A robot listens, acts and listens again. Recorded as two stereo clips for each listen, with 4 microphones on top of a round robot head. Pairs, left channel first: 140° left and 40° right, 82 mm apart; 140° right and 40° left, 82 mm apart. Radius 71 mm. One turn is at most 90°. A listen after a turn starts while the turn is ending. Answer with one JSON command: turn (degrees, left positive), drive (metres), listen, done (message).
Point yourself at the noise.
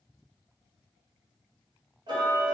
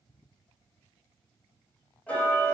{"turn": -65}
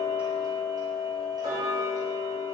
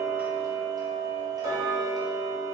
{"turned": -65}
{"done": "Facing the ticking, under 1 m away."}